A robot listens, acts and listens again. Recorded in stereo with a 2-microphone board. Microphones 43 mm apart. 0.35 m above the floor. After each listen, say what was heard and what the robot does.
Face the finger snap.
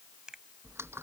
The finger snap: about 20° right or 160° right. Turn 20° right.
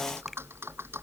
Keep listening.
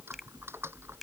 Keep listening.
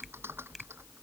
I heard a finger snap, but can't make it out now. It was about straight ahead or 140° right.